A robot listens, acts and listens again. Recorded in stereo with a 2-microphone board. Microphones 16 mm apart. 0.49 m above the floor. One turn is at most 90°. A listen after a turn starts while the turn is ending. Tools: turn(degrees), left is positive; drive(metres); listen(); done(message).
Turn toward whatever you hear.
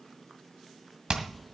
turn(degrees=-60)
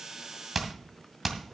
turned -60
done("Facing the hammering, 2 to 4 m away.")